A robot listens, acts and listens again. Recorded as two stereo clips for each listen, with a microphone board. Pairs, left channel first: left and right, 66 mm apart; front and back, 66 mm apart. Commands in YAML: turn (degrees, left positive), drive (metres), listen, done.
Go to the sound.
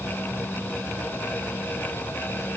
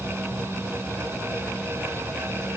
listen: true
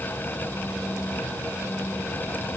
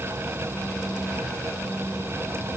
listen: true
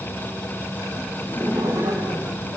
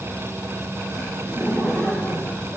turn: -100
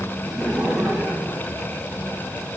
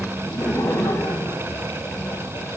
turn: -20
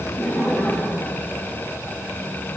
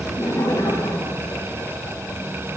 drive: 1.0
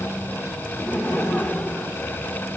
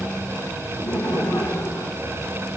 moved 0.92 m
drive: 1.0
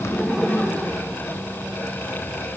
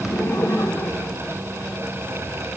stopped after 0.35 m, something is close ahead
done: "Arrived at the laughter, straight ahead."